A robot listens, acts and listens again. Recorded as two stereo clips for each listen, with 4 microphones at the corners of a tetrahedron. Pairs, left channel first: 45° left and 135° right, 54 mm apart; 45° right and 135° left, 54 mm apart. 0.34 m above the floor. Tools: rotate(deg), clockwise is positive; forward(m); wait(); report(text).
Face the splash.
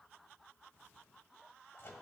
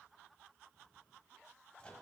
wait()
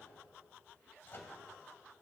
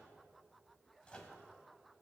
wait()
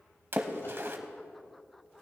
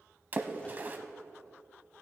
rotate(175)
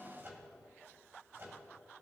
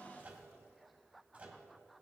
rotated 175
report("Facing where the splash came from. I can't hear it now.")